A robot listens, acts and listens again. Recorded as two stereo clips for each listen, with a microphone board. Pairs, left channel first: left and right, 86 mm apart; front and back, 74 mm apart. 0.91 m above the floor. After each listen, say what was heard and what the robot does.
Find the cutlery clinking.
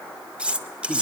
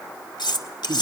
The cutlery clinking: 15° right. Turn 15° right.
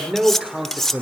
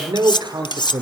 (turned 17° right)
Found it: cutlery clinking, straight ahead, 1 to 2 m away.